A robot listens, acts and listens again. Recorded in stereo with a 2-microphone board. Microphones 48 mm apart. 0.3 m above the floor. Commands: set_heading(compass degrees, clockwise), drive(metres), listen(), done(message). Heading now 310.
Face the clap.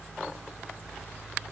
listen()
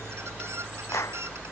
set_heading(220)
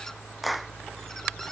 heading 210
done("Facing the clap.")